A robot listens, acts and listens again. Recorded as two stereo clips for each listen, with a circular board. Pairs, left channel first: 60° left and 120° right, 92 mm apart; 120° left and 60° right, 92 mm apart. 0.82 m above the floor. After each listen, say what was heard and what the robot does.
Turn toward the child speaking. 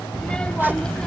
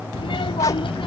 The child speaking: 140° left. Turn 140° left.
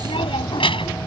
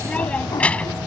The child speaking is now 45° left. Turn 45° left.
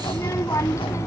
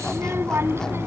Facing the child speaking.